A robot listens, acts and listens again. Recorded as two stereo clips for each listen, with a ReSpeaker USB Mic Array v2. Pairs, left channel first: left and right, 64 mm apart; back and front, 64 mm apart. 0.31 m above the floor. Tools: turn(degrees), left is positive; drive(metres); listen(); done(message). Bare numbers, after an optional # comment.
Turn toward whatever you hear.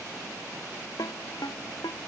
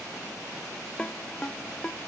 # The ringtone: 105° left.
turn(105)
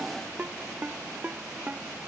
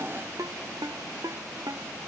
# The ringtone is now 25° right.
turn(-25)
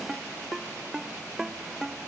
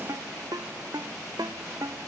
# The ringtone is now 10° right.
turn(-10)
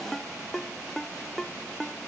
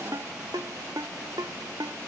done("Found it: a ringtone, straight ahead.")